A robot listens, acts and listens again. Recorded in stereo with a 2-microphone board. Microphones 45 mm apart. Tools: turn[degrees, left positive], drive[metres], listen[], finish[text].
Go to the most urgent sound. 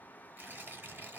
Action: listen[]
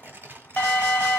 Thought: The alarm: about 45° left or 135° left.
Action: turn[45]
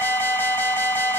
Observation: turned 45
Thought: So it is at 90° left.
Action: turn[90]
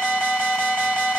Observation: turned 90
Action: drive[1.0]
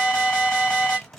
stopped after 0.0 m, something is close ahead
Action: finish[Blocked. The alarm is further on, straight ahead.]